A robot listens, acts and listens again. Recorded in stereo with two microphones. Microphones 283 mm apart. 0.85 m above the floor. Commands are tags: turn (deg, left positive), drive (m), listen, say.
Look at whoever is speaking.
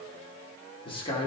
<turn deg="20"/>
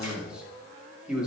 <say>Facing the man speaking.</say>